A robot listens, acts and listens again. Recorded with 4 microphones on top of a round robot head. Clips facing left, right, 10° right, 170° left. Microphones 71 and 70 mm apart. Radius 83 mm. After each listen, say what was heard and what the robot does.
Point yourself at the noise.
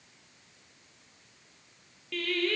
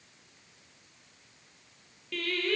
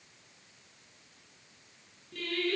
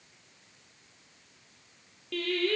The singing: 175° right. Turn 175° right.
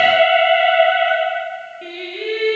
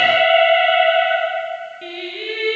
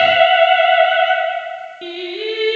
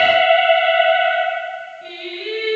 The singing is now 10° left. Turn 10° left.
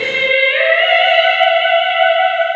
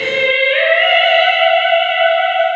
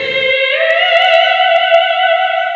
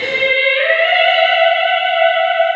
Facing the singing.